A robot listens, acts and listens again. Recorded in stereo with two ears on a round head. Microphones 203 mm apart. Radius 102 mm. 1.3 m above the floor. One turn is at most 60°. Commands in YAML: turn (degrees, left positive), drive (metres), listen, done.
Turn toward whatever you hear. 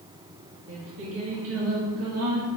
turn: -60
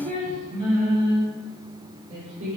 turn: -35
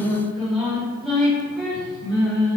done: "Facing the singing, 2 to 4 m away."